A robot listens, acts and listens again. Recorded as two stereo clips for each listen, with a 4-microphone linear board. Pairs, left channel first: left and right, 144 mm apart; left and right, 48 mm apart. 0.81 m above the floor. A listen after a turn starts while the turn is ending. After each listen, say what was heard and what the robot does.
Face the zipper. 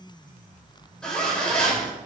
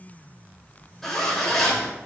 Turn 30° left.
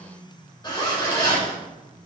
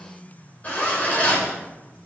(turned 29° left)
So it is at 145° left. Turn 145° left.
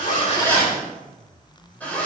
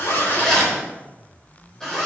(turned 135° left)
The zipper is now 10° left. Turn 10° left.
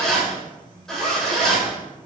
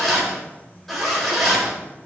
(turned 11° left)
Found it: a zipper, straight ahead.